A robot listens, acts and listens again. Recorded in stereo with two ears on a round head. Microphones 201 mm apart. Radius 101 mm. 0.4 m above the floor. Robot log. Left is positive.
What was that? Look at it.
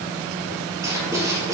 cmd yaw -30
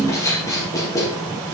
note: So it is at 15° left.
cmd yaw +15
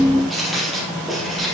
end: Facing the writing, 2 to 4 m away.